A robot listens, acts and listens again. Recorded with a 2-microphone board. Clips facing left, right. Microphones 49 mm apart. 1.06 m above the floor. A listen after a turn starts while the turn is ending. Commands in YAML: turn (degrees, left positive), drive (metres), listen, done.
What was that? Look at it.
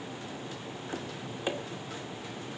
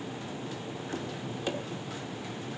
turn: 20
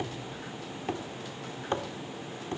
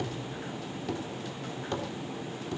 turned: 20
turn: 140
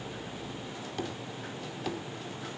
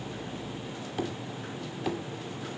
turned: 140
turn: -10
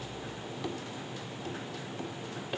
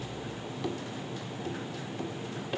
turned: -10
done: "Facing the tapping."